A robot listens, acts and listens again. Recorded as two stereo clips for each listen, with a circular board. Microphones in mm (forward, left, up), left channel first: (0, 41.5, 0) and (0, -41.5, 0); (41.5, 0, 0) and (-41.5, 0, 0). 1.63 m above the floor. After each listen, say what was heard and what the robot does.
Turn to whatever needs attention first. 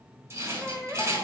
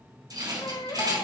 The baby crying: 15° right. Turn 15° right.
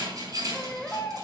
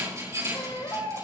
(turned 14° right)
Facing the baby crying.